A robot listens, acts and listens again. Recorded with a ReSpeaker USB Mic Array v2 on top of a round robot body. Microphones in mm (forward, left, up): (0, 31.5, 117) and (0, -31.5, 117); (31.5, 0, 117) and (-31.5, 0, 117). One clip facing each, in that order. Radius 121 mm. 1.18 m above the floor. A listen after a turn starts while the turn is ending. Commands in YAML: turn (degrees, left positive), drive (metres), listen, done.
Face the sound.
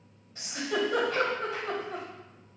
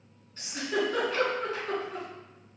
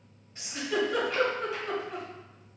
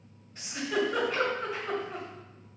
turn: 85
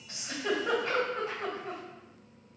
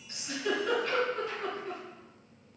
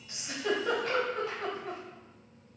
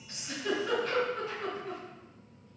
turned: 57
turn: 30
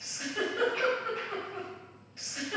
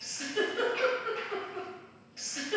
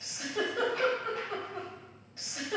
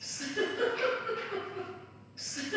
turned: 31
done: "Found it: a giggle, straight ahead, 2 to 4 m away."